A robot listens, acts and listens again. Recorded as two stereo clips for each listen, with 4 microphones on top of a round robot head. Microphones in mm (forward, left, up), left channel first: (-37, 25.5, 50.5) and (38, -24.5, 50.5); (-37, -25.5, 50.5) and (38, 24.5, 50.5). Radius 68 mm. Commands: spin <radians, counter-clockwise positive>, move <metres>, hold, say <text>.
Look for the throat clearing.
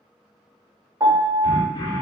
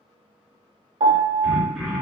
spin 2.09
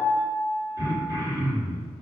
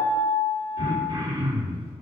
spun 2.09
spin 0.26
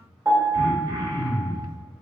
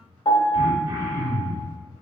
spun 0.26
say Facing the throat clearing.